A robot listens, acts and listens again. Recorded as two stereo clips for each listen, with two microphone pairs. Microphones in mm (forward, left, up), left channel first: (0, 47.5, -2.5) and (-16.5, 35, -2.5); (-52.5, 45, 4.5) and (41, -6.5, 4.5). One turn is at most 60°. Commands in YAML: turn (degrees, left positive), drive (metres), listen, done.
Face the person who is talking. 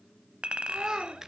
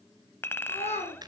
turn: 60
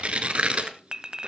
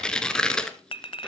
turn: 60
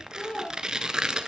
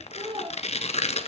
turn: 10
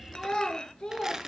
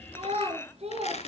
turn: -15
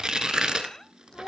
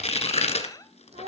turn: -10
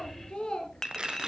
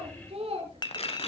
done: "Found it: a child speaking, straight ahead, 2 to 4 m away."